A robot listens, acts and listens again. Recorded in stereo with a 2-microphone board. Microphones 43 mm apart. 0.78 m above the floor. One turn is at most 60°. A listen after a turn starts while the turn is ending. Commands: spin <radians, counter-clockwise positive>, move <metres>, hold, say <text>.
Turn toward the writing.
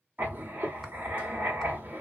spin -0.79
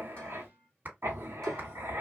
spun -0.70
spin -1.05
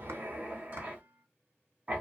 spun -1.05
spin -0.61
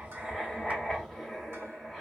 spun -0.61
say Facing the writing.